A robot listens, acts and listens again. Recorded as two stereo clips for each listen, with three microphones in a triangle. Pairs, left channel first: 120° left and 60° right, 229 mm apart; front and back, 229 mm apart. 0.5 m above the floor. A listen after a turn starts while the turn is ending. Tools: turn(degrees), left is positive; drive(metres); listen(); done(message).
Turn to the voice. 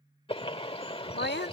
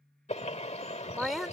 turn(degrees=90)
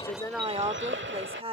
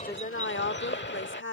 done("Facing the woman speaking.")